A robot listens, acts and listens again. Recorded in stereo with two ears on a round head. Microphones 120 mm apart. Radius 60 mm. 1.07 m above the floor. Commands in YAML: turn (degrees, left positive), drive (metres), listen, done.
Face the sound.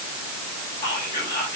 turn: 25
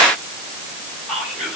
done: "Found it: whispering, straight ahead, over 4 m away."